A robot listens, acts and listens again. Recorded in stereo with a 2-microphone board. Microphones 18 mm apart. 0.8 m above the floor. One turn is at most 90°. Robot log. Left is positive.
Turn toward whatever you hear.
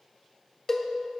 note: The cowbell: about 30° left or 150° left.
cmd yaw +30
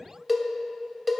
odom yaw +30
end: Found it: a cowbell, straight ahead.